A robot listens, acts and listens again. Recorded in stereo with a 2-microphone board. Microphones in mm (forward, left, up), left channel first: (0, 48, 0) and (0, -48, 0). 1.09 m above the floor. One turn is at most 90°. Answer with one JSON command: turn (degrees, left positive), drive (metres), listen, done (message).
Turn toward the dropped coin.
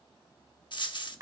{"turn": 55}
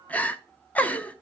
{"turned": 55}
{"listen": true}
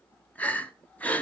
{"done": "I heard a dropped coin, but can't make it out now. It was about straight ahead or 70° left."}